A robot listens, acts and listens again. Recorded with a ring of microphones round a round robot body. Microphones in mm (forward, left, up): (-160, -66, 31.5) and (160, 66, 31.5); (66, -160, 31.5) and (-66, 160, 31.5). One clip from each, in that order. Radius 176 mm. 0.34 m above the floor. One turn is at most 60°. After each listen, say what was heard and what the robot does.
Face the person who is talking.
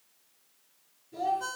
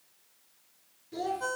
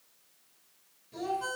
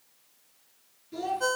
The child speaking: 55° left. Turn 55° left.
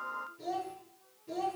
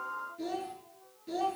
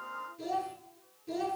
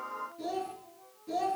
The child speaking is now 20° left. Turn 20° left.
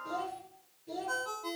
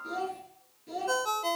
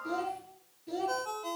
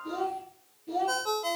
Found it: a child speaking, straight ahead.